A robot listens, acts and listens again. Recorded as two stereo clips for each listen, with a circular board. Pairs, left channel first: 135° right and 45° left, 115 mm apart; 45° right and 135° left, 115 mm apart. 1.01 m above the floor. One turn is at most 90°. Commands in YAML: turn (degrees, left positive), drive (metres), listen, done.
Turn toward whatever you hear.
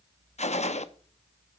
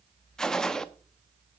turn: -90
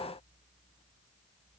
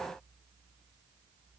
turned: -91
turn: -40
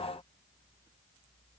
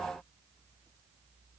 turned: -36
done: "I heard a gunshot from this way, but can't make it out now."